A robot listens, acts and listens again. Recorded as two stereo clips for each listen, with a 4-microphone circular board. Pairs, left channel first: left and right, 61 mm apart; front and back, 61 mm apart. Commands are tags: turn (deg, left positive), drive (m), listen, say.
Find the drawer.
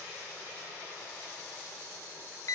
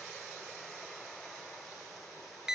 <listen/>
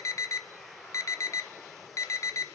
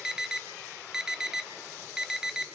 <listen/>
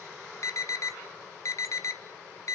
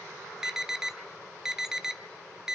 <say>I can't make out a drawer, only an alarm.</say>